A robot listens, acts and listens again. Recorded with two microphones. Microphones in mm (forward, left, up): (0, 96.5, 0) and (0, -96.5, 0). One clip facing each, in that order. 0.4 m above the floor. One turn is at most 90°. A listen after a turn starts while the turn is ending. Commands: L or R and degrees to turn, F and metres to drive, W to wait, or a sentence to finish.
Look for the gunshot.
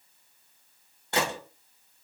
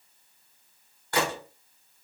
L25
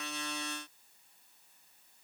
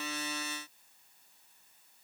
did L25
W
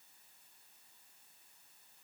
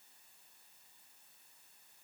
I heard a gunshot, but can't make it out now. It was about straight ahead or 130° left.